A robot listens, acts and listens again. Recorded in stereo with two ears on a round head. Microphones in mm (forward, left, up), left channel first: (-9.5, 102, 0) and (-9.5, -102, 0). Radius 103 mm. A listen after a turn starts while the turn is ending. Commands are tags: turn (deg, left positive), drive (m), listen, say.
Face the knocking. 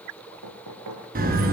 <turn deg="-90"/>
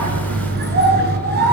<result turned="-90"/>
<listen/>
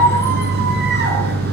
<listen/>
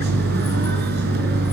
<say>Facing where the knocking came from. I can't hear it now.</say>